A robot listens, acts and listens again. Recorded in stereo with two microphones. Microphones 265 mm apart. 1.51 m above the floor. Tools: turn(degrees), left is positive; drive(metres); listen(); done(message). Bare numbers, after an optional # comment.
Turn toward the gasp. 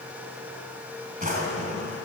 listen()
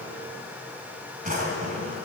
listen()
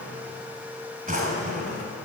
done("I can't make out a gasp to turn to.")